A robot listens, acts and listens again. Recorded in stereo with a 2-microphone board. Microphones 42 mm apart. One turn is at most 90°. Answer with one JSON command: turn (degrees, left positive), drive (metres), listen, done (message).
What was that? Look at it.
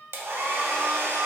{"turn": -90}
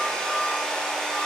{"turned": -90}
{"turn": 10}
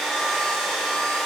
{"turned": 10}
{"done": "Facing the hair dryer."}